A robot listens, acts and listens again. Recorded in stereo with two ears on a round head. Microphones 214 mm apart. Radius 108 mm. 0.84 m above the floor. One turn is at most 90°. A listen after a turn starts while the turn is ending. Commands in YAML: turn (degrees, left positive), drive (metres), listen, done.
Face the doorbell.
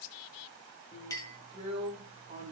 listen: true
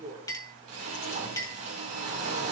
listen: true
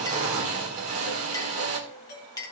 turn: 40
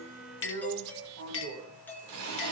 turn: 10
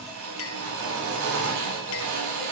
listen: true
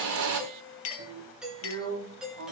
done: "Found it: a doorbell, straight ahead, 2 to 4 m away."